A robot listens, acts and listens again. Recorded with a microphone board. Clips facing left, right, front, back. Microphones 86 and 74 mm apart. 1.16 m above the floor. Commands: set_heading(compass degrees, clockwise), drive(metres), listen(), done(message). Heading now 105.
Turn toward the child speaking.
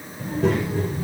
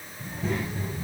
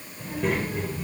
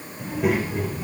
set_heading(10)
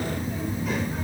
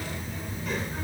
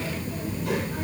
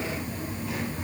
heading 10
done("Found it: a child speaking, straight ahead, over 4 m away.")